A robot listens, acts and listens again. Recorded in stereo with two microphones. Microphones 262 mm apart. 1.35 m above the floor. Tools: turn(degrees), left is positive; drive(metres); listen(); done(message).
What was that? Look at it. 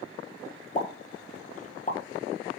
turn(degrees=30)
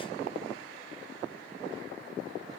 listen()
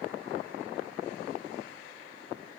done("I heard a pop, but can't make it out now. It was about straight ahead or 120° left.")